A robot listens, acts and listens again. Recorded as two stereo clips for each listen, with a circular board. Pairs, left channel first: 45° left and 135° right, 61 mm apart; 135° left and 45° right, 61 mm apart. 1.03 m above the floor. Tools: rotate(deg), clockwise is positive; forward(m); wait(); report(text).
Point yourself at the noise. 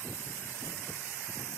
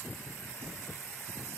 wait()
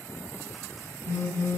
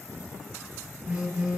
rotate(-20)
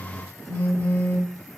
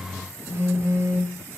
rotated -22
report("Facing the phone buzzing, 2 to 4 m away.")